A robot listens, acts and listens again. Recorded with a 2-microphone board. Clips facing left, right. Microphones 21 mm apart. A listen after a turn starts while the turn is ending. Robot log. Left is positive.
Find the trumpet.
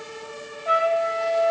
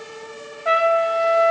cmd yaw -90
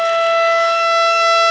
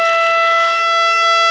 note: So it is at 10° left.
cmd yaw +10
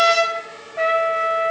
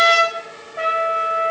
end: Facing the trumpet.